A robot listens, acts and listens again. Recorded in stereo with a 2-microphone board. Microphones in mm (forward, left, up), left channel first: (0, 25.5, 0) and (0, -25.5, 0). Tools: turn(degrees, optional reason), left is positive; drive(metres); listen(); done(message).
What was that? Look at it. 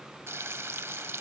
turn(degrees=-60, reason="The frying: about 60° right or 120° right.")
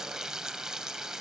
turn(degrees=-15, reason="So it is at 15° right.")
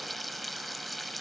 done("Found it: frying, straight ahead.")